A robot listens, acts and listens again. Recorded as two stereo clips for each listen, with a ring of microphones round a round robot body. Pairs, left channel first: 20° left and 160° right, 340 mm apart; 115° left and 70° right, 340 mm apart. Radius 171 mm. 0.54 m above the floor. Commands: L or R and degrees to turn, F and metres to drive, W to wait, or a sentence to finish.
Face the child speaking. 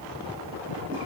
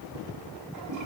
W
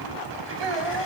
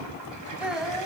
R160
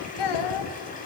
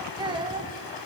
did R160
L10
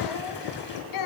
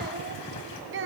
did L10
R10
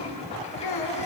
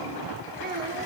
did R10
Found it: a child speaking, straight ahead, 2 to 4 m away.